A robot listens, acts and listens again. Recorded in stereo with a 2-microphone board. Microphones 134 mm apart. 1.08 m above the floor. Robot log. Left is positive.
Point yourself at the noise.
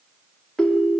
cmd yaw +30
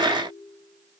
cmd idle
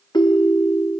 note: So it is at 145° left.
cmd yaw +145
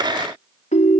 note: The ringtone is now 65° left.
cmd yaw +65
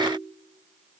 cmd idle
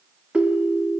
note: The ringtone is now 10° right.
cmd yaw -10
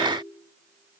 cmd idle
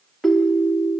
end: Facing the ringtone, 1 to 2 m away.